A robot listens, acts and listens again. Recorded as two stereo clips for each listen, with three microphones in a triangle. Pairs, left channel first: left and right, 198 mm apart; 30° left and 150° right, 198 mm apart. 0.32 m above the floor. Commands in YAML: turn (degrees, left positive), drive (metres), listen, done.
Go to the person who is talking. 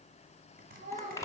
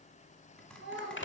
turn: -140
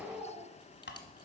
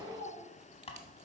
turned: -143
drive: 1.0
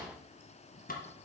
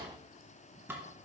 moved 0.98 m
listen: true
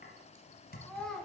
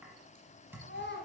drive: 1.0
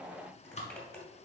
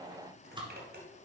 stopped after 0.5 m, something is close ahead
listen: true
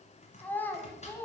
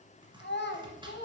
turn: 10
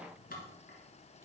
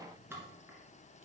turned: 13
listen: true
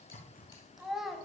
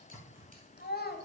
done: "I am next to the child speaking."